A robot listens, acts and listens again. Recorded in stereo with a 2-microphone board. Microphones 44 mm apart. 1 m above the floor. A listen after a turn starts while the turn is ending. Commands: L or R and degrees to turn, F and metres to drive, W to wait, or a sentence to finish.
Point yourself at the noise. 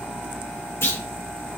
L75
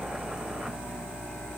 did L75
W
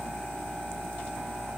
I heard a clunk, but can't make it out now. It was about straight ahead or 30° left.